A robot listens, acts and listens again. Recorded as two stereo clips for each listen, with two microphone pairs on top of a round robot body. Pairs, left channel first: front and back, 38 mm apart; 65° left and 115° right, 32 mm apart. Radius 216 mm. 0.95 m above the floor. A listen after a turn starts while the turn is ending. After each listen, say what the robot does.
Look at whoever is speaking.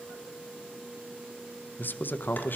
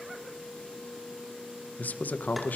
Turn 35° left.
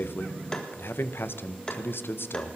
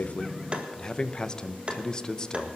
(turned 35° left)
Facing the man speaking, under 1 m away.